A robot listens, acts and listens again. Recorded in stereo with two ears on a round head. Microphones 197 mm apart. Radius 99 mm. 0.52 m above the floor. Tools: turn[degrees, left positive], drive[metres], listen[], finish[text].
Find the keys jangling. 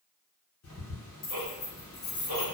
Thought: The keys jangling: about 50° left or 130° left.
Action: turn[50]
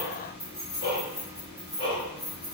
Action: finish[Found it: keys jangling, straight ahead.]